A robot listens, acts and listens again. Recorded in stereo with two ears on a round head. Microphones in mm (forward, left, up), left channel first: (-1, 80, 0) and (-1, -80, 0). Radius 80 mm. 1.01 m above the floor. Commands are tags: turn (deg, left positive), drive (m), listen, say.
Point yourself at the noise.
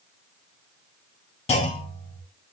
<turn deg="40"/>
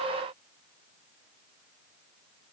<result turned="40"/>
<listen/>
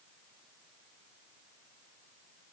<say>I heard a clunk, but can't make it out now. It was about straight ahead or 100° left.</say>